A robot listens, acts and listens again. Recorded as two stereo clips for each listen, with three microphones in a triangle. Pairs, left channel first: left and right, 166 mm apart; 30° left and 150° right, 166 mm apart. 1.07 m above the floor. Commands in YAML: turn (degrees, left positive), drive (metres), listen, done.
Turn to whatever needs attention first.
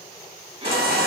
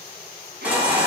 turn: -70
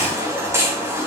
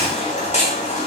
turn: -15
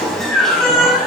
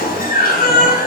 done: "Found it: a baby crying, straight ahead."